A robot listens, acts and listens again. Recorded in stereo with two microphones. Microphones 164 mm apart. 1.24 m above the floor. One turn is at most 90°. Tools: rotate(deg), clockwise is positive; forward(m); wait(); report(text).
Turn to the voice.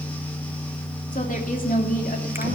rotate(-60)
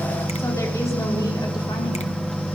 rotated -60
wait()
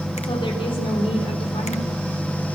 rotate(-35)
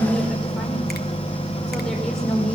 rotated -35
report("Found it: a woman speaking, straight ahead.")